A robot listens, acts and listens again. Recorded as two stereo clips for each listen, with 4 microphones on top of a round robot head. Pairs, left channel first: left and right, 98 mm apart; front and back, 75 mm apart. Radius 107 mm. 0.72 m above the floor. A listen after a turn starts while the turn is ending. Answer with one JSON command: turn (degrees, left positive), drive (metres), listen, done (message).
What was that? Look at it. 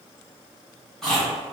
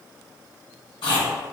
{"done": "Found it: chewing, straight ahead, under 1 m away."}